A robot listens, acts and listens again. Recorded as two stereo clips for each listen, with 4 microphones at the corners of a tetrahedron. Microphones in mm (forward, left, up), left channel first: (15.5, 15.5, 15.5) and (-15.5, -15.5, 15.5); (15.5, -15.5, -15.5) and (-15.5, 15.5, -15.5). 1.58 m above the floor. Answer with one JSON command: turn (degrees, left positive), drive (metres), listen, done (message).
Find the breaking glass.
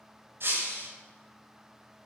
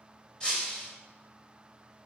{"turn": -110}
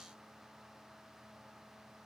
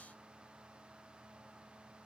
{"done": "I heard breaking glass from this way, but can't make it out now."}